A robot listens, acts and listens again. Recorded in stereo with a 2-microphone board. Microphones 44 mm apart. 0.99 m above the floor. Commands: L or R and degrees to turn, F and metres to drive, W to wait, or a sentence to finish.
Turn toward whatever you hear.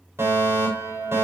R90
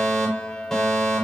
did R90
Found it: a fire alarm, straight ahead, over 4 m away.